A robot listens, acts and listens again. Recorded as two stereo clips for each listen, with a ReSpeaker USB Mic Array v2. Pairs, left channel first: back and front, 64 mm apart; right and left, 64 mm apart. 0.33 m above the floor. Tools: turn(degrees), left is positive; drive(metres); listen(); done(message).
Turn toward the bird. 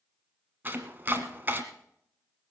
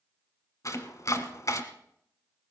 listen()
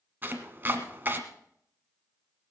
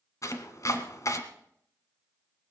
listen()
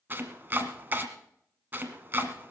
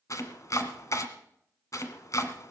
done("I can't make out a bird to turn to.")